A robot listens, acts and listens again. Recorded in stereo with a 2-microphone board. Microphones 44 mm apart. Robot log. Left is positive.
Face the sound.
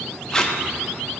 note: The tape being pulled: about 15° left or 165° left.
cmd yaw +15
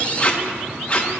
note: So it is at 150° left.
cmd yaw +150
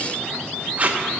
note: The tape being pulled is now 40° right.
cmd yaw -40
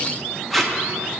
end: Facing the tape being pulled, under 1 m away.